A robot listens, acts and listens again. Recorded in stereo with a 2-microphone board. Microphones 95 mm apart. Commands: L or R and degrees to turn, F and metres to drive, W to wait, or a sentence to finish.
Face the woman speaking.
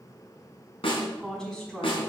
L30
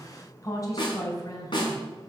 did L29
L140
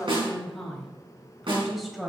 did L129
Found it: a woman speaking, straight ahead, 2 to 4 m away.